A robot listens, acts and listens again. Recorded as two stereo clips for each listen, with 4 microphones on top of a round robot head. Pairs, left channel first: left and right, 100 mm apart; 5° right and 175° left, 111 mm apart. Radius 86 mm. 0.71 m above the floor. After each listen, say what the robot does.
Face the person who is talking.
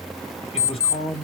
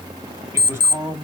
Turn 105° left.
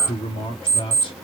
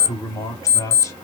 Turn 55° left.
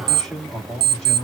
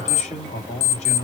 Found it: a man speaking, straight ahead, 2 to 4 m away.